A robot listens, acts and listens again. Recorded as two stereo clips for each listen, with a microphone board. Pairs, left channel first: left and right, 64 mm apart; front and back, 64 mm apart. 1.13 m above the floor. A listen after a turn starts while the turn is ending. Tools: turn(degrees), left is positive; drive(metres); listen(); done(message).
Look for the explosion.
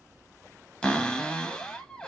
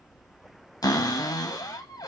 listen()
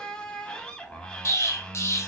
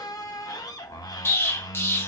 turn(degrees=50)
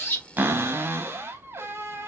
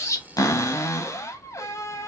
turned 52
done("Facing where the explosion came from. I can't hear it now.")